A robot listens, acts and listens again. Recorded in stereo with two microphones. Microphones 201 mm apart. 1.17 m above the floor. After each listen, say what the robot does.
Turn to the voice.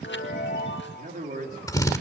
Turn 45° right.
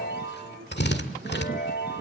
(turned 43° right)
Keep listening.
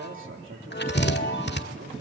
Turn 90° right.
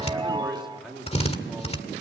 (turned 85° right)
Found it: a man speaking, straight ahead, 2 to 4 m away.